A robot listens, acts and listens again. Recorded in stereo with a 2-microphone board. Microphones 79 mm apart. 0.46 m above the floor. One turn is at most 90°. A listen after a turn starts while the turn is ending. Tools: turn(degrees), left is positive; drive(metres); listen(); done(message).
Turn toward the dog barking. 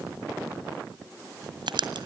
listen()
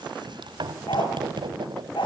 turn(degrees=90)
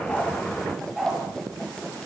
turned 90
done("Facing the dog barking.")